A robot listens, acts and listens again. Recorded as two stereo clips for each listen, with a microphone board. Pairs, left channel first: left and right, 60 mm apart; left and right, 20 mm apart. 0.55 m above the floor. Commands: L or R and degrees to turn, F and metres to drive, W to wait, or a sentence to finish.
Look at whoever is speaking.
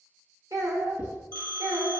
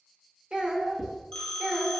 R60
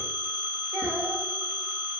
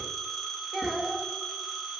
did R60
R45
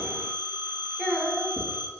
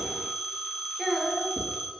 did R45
R20
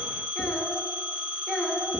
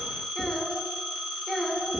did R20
Found it: a child speaking, straight ahead, 1 to 2 m away.